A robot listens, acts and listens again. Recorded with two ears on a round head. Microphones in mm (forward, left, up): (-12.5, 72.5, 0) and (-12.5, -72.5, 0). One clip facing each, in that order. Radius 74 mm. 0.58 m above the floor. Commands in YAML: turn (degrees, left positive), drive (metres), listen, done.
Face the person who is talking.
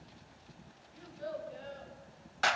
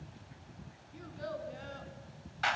turn: -60
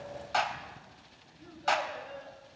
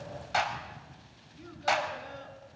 turn: -60
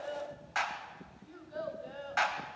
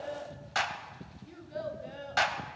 turn: -20
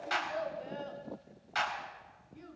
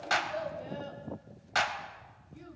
done: "Facing the child speaking."